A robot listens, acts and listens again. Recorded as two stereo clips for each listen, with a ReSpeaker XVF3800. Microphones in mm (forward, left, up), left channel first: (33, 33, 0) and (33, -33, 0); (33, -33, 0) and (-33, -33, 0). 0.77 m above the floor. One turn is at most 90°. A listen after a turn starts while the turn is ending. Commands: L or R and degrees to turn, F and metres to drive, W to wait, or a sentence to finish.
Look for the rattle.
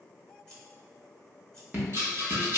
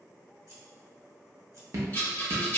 R50
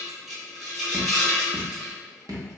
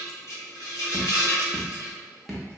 Found it: a rattle, straight ahead, 1 to 2 m away.